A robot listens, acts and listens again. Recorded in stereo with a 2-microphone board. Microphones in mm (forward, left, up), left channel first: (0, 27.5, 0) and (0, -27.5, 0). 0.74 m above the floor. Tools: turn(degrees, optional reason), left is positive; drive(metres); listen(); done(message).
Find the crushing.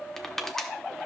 turn(degrees=30)
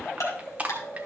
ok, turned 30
turn(degrees=-25, reason="So it is at 25° right.")
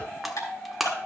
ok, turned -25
done("Found it: crushing, straight ahead.")